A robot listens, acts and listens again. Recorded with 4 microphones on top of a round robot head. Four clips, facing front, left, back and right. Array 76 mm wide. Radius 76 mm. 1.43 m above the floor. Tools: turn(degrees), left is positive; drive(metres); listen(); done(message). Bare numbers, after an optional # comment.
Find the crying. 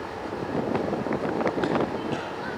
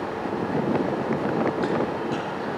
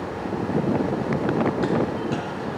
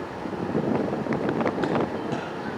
listen()
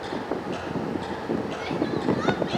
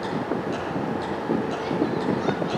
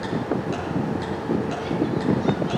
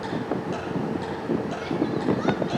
listen()
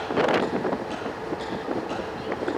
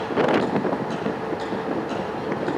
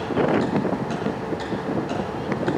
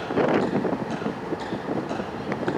done("I can't make out crying.")